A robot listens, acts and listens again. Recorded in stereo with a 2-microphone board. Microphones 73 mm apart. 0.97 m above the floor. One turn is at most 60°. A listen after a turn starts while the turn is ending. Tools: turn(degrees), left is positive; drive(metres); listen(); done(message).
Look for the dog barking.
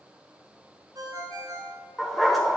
turn(degrees=30)
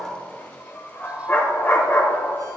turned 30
turn(degrees=60)
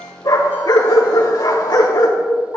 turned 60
turn(degrees=60)
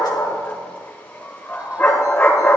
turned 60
turn(degrees=25)
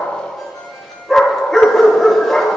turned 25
done("Found it: a dog barking, straight ahead, 1 to 2 m away.")